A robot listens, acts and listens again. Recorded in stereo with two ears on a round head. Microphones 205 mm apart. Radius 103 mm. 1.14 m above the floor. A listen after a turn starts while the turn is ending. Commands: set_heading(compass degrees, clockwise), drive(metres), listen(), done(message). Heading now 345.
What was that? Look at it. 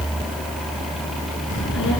set_heading(290)
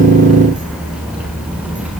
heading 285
done("Found it: a child speaking, straight ahead, over 4 m away.")